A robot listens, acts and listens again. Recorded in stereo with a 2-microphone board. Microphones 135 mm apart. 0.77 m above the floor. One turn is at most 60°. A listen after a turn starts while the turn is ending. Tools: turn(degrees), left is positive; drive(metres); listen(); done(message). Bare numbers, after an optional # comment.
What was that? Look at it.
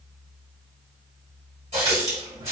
# The running tap: about 50° right or 130° right.
turn(-50)
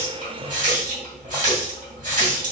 # So it is at 80° right.
turn(-60)
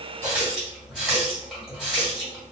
done("Facing the running tap, 1 to 2 m away.")